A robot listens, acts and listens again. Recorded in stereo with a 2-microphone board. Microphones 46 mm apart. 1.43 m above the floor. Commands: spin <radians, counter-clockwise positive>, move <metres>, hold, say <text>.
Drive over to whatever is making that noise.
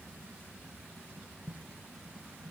hold
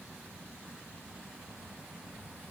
hold
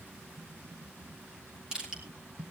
spin -0.35
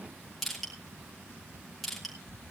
move 1.0
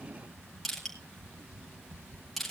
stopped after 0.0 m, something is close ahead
say Something is in my way. I am facing the crushing but have not reached it.